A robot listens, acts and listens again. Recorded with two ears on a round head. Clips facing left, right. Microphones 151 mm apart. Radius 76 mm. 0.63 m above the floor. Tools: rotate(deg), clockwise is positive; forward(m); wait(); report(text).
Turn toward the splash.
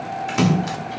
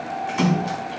rotate(-75)
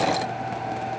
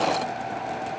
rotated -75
wait()
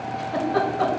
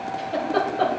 report("I heard a splash, but can't make it out now. It was about straight ahead or 30° left.")